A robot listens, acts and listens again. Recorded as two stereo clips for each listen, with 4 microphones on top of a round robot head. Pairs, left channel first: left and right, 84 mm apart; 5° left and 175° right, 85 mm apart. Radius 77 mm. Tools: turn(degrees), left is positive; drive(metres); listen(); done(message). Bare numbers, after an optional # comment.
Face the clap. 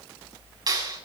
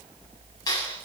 # The clap: 50° right.
turn(-50)
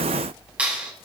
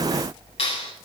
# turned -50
# The clap is now 15° right.
turn(-15)
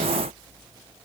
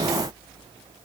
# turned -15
listen()
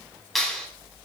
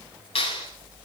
done("Facing the clap, over 4 m away.")